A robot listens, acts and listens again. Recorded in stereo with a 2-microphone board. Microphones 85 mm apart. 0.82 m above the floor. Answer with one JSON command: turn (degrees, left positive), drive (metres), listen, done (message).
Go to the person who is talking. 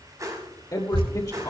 {"turn": 45}
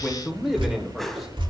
{"drive": 1.0}
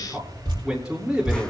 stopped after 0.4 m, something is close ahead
{"turn": -10}
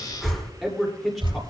{"done": "Something is in my way. I am facing the man speaking but have not reached it."}